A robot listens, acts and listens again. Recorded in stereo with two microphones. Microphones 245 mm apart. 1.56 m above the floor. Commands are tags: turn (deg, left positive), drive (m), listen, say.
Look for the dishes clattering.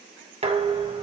<turn deg="-25"/>
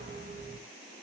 <turn deg="-130"/>
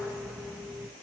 <say>Found it: dishes clattering, straight ahead.</say>